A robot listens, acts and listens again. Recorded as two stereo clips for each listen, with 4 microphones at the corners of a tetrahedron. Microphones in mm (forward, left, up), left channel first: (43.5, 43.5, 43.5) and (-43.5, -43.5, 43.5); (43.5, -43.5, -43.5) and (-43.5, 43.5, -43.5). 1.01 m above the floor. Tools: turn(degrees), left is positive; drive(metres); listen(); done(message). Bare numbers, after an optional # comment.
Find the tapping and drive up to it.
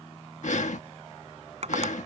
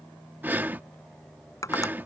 # The tapping: 110° right.
turn(-110)
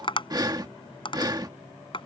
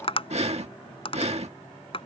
drive(1.0)
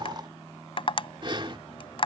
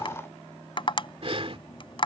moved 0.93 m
drive(1.0)
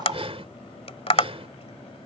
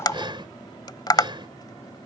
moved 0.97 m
# The tapping is now 10° left.
turn(10)
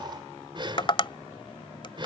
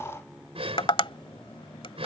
drive(1.0)
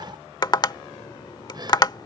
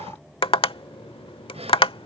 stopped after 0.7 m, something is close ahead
done("Arrived at the tapping, straight ahead.")